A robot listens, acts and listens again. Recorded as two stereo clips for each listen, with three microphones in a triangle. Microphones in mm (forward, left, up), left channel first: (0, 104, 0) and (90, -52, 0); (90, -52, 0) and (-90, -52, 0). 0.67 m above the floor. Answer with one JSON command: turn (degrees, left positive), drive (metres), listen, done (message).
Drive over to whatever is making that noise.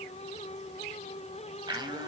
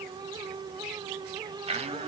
{"turn": -125}
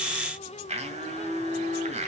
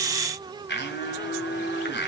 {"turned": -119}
{"drive": 1.0}
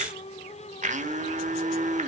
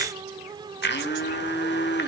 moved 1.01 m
{"turn": -10}
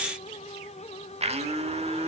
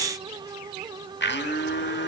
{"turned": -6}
{"drive": 1.0}
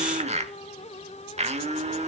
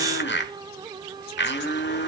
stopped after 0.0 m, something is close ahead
{"done": "Arrived at the blender, straight ahead."}